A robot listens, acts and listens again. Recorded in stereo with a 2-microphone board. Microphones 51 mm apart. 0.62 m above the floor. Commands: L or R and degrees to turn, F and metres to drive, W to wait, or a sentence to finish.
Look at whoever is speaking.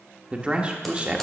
R25
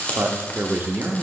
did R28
R125
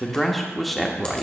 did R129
Found it: a man speaking, straight ahead.